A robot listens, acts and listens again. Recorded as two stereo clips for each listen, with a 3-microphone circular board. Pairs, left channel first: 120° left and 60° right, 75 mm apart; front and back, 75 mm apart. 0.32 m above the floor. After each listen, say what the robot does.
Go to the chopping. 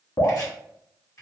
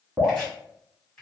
Turn 75° left.
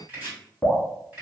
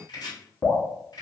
Drive 1.0 m forward.
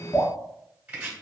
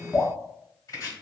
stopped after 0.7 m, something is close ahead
Arrived at the chopping, straight ahead.